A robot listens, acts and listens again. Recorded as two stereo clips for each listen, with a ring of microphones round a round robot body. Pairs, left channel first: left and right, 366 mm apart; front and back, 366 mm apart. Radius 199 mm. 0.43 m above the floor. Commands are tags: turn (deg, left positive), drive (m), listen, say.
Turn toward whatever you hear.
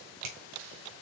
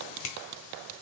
<turn deg="-50"/>
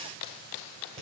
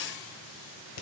<turn deg="-15"/>
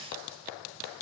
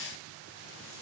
<listen/>
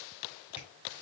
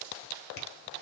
<listen/>
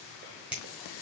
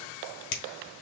<say>Facing the finger snap, 1 to 2 m away.</say>